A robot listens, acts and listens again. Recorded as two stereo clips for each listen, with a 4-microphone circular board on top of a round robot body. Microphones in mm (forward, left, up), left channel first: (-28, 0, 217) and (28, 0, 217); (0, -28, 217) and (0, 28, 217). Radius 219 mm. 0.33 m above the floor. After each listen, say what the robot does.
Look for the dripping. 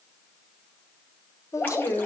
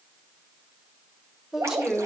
Turn 120° left.
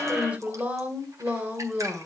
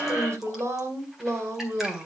Keep listening.
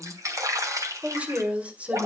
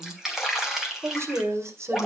Turn 10° left.
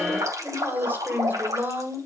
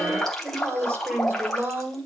Found it: dripping, straight ahead.